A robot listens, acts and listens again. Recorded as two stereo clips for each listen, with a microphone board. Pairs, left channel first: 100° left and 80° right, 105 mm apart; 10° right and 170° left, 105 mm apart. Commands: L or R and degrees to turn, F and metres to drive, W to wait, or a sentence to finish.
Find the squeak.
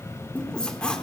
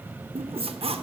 L180
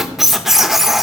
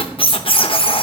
L10
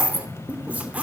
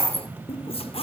Found it: a squeak, straight ahead, under 1 m away.